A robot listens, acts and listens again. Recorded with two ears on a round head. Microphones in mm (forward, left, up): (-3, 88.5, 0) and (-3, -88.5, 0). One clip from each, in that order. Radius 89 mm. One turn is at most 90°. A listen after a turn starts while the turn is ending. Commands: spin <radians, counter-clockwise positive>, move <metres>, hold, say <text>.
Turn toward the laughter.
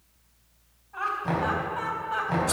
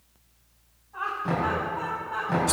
spin 1.57
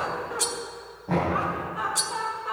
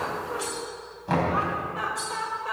spin -0.35
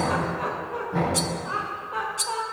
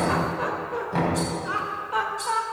spin -0.61
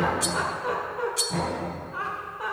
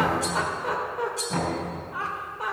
spin -0.17
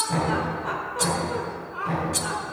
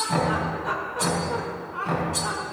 say Facing the laughter.